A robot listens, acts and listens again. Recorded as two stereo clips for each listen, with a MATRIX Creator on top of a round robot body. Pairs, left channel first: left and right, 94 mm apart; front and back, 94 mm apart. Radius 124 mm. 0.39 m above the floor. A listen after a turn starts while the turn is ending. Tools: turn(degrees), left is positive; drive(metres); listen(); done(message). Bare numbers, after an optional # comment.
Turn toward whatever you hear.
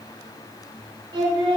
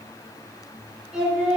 # The singing: 100° right.
turn(-100)
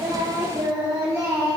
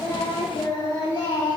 # The singing is now 35° right.
turn(-35)
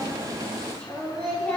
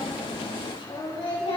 # The singing is now 10° left.
turn(10)
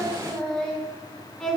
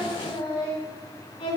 done("Found it: singing, straight ahead.")